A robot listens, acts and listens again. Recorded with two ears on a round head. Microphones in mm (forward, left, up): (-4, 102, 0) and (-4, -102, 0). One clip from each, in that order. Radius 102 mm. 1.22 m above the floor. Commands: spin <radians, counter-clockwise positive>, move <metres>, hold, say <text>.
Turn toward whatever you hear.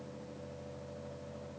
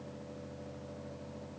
hold
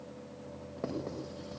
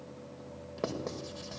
spin -1.57
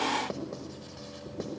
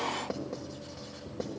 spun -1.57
spin 0.17
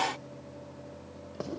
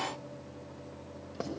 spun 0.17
say Facing the writing.